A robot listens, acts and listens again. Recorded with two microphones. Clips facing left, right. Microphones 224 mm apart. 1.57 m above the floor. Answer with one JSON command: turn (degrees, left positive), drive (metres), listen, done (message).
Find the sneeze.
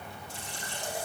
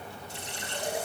{"listen": true}
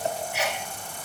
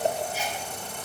{"turn": 75}
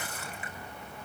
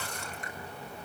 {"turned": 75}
{"listen": true}
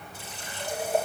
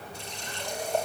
{"done": "I heard a sneeze, but can't make it out now. It was about straight ahead or 30° left."}